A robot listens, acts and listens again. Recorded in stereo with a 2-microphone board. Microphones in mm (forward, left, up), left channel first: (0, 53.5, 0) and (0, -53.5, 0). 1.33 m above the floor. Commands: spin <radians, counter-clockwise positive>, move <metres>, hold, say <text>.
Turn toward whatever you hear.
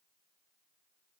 hold
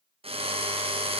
spin -1.13
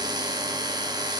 spin -0.70
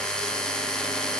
say Facing the drill, under 1 m away.